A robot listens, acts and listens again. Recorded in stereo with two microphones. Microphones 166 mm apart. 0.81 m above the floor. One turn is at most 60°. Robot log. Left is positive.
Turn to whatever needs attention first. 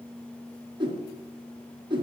cmd idle
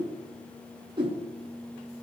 cmd idle
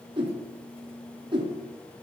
end: I can't make out anything urgent to turn to.